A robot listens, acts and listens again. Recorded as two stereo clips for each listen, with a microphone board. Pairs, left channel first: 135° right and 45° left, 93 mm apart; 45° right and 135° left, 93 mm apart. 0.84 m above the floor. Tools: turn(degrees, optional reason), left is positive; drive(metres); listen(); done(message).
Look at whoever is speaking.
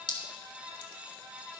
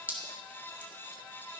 listen()
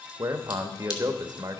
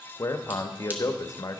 done("Found it: a man speaking, straight ahead.")